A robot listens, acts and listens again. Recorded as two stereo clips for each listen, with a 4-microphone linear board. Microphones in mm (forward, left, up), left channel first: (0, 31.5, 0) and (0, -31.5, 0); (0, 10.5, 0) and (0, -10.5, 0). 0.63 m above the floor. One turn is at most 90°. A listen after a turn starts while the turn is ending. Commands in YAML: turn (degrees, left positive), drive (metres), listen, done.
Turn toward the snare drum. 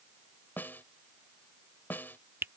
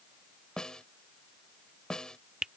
turn: 35
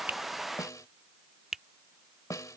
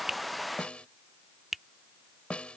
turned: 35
turn: 90
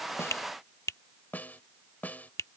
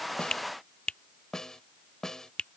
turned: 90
turn: 30
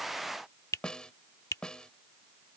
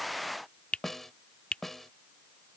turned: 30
turn: 15
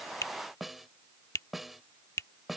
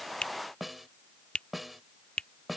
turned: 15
done: "Found it: a snare drum, straight ahead."